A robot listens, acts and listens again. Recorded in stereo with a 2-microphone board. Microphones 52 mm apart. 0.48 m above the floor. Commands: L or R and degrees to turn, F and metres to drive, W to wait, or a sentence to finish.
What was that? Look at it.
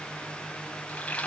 L25
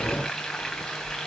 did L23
Facing the frying.